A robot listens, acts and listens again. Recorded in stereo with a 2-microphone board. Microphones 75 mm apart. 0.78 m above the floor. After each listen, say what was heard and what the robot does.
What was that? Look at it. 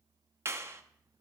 The clap: about 35° right or 145° right. Turn 35° right.
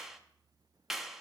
Found it: a clap, straight ahead, under 1 m away.